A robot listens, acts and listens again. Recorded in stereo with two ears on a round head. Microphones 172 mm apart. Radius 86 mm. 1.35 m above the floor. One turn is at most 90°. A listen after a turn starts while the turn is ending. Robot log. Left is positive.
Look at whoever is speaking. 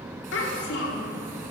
note: The child speaking: about 70° left or 110° left.
cmd yaw +70
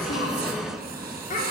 note: So it is at 40° left.
cmd yaw +40
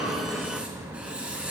cmd idle
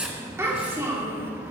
note: The child speaking is now 15° right.
cmd yaw -15
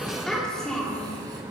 end: Facing the child speaking, 2 to 4 m away.